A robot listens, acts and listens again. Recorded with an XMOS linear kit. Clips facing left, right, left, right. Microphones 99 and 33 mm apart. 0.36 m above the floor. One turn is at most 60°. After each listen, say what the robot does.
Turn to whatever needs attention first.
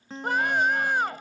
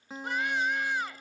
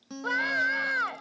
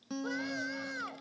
Turn 55° left.
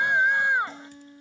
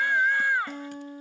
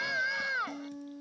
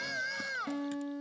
Turn 25° left.
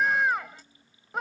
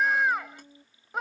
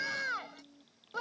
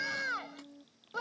Facing the scream.